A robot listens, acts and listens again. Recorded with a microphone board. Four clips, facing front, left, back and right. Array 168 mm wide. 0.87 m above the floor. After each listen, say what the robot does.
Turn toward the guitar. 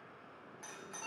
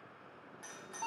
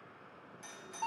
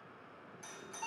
Keep listening.
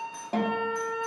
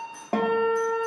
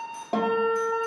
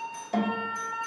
Turn 105° left.
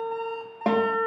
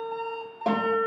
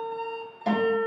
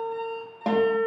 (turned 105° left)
Facing the guitar.